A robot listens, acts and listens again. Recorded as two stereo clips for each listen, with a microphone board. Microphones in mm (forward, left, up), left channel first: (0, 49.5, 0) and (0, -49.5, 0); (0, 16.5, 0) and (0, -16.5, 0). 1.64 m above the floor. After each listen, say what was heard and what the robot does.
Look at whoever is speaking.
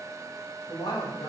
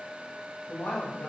The woman speaking: about 45° left or 135° left. Turn 45° left.
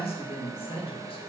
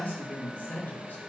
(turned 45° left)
So it is at 65° left. Turn 65° left.
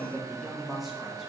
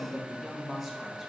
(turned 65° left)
Found it: a woman speaking, straight ahead.